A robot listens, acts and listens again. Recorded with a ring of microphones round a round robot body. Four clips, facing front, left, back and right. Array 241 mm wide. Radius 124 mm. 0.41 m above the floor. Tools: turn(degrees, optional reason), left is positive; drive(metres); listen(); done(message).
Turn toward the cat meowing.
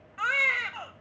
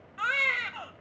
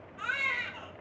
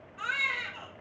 listen()
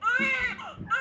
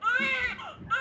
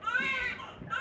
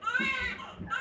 turn(degrees=-10, reason="The cat meowing: 10° right.")
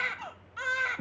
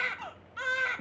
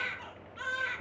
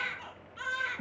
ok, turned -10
done("Facing the cat meowing, 2 to 4 m away.")